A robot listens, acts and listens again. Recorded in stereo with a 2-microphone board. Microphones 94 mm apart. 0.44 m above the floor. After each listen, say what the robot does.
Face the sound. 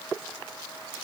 Keep listening.
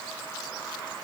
Keep listening.
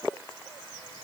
I can't make out anything to turn to.